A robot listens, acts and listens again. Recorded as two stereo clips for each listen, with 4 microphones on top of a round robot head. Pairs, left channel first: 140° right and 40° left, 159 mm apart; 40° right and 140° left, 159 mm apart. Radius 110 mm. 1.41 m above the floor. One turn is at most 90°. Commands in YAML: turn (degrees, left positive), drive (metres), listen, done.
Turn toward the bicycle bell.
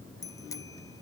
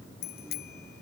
turn: -70
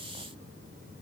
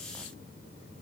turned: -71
listen: true
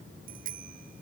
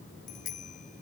done: "Facing the bicycle bell."